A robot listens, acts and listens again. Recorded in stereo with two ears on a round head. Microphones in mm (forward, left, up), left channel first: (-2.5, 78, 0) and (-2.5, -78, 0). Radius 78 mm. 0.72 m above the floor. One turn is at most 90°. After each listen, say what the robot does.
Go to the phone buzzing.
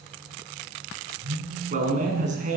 Turn 50° right.
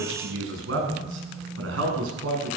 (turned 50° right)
Drive 1.0 m forward.
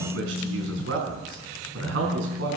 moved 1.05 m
Drive 1.0 m forward.
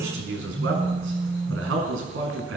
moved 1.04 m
Drive 1.0 m forward.
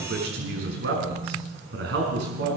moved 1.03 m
Drive 1.0 m forward.
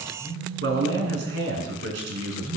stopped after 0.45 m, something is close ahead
Turn 15° left.
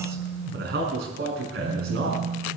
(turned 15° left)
Arrived at the phone buzzing, straight ahead.